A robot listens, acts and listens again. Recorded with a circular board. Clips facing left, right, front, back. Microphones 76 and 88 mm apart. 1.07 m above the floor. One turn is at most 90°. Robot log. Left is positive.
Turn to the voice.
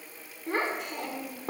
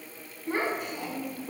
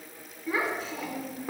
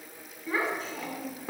note: The child speaking: 85° left.
cmd yaw +85
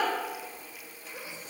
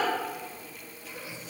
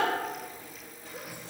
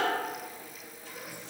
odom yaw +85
note: The child speaking is now 30° left.
cmd yaw +30
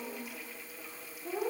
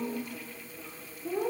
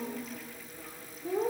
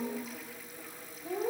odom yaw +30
end: Facing the child speaking, 2 to 4 m away.